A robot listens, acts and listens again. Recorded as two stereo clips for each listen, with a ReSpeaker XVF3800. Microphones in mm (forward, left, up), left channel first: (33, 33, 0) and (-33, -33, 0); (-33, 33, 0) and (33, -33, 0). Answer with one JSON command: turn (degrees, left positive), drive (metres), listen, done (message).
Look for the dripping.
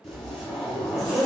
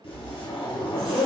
{"listen": true}
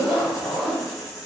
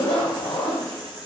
{"listen": true}
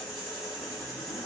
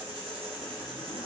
{"done": "I can't make out dripping to turn to."}